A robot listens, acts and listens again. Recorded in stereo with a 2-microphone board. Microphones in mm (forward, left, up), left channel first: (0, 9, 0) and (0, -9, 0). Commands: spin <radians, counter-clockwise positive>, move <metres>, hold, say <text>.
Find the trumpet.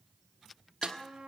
spin -1.57
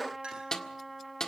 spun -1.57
say Facing the trumpet, over 4 m away.